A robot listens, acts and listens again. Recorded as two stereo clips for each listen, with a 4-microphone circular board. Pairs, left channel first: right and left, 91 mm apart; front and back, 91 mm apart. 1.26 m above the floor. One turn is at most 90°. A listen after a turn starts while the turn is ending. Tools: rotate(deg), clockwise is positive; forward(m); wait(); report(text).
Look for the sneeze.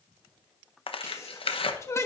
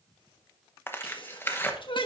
rotate(30)
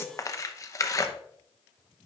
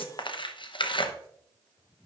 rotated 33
report("Facing where the sneeze came from. I can't hear it now.")